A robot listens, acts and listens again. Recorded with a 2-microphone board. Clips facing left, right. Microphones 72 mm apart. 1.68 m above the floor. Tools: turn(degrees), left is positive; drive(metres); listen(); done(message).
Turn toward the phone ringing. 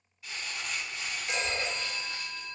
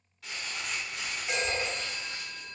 turn(degrees=-30)
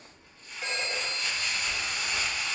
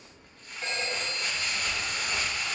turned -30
turn(degrees=15)
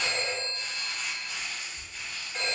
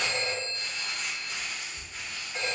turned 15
done("Facing the phone ringing.")